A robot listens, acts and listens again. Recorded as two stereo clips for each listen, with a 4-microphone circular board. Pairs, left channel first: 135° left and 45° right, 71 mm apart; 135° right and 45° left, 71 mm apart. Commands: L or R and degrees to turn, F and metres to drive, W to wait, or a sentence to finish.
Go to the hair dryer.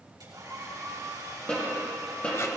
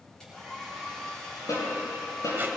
R55
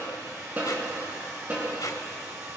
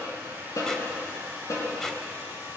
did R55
R10
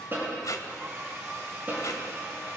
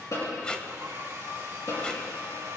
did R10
F1.0
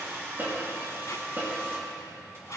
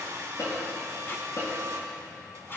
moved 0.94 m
F1.0
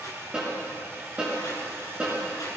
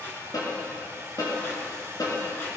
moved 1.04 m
F1.0
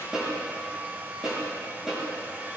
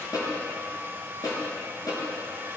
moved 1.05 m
F1.0
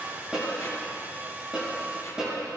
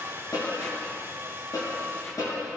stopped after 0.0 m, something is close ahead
L10
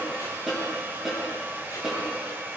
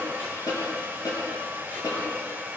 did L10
Arrived at the hair dryer, straight ahead.